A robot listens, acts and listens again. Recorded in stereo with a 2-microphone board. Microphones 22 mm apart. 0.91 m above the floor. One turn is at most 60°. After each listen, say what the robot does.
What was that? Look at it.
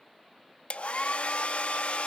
Turn 60° left.
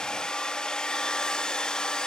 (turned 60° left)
Turn 40° left.
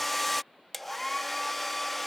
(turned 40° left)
Found it: a hair dryer, straight ahead.